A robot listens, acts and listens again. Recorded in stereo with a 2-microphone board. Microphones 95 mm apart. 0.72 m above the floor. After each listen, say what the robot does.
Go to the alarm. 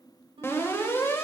Turn 25° left.
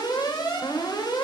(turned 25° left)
Turn 130° left.
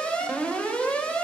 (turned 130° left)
Turn 15° left.
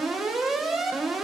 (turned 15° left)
Drive 1.0 m forward.
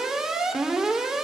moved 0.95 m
Drive 1.0 m forward.
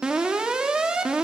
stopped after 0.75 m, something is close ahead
Turn 10° right.
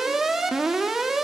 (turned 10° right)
Arrived at the alarm, straight ahead.